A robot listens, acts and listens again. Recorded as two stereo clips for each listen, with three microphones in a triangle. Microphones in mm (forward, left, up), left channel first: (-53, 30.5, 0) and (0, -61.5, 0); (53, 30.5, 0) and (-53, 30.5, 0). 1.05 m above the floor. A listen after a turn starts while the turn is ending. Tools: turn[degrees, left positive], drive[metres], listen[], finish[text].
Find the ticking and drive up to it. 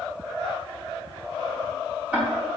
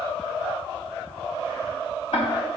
Thought: The ticking: 20° left.
Action: turn[20]
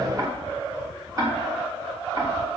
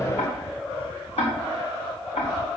Action: drive[1.0]
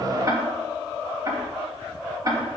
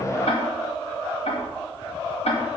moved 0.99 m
Action: drive[1.0]
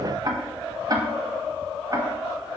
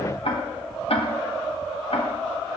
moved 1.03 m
Thought: The ticking is now 10° right.
Action: turn[-10]
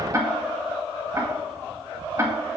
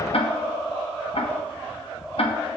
Action: drive[1.0]
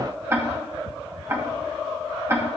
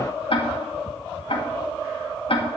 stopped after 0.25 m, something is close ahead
Action: finish[I am next to the ticking.]